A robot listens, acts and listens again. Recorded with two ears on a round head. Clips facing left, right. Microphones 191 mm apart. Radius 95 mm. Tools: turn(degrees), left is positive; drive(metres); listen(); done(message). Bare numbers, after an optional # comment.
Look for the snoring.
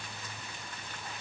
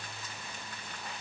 listen()
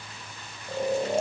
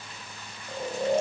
turn(30)
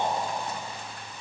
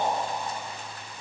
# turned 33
# So it is at 135° left.
turn(135)
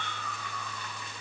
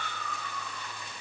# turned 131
# The snoring is now 10° left.
turn(10)
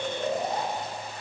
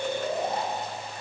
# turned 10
done("Facing the snoring.")